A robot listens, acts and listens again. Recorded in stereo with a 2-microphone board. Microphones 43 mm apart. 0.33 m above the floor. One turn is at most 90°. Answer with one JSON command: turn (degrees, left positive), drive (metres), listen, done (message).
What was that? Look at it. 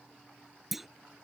{"turn": -30}
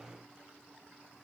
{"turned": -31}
{"listen": true}
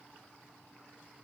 {"done": "I heard a clunk, but can't make it out now. It was about 25° left or 145° right."}